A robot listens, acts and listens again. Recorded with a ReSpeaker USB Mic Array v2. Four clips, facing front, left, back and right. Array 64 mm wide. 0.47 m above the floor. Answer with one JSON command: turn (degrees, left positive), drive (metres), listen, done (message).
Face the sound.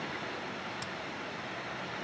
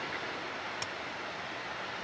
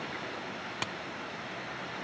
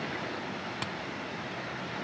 {"turn": -170}
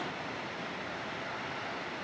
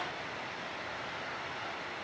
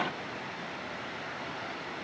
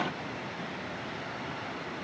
{"done": "I heard a crack from this way, but can't make it out now."}